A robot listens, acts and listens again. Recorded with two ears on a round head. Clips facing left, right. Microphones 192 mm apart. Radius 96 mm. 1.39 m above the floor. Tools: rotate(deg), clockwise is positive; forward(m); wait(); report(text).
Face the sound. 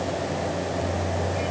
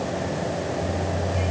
wait()
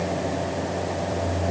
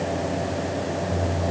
wait()
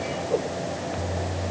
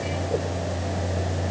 report("I can't make out anything to turn to.")